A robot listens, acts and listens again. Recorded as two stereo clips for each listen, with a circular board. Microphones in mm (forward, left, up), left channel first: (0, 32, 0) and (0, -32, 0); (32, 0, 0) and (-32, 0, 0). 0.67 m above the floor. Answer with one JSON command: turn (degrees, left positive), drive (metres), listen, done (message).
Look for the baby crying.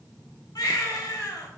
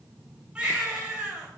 {"turn": 105}
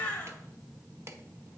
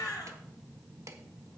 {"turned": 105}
{"turn": 20}
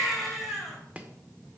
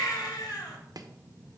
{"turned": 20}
{"done": "Found it: a baby crying, straight ahead, 2 to 4 m away."}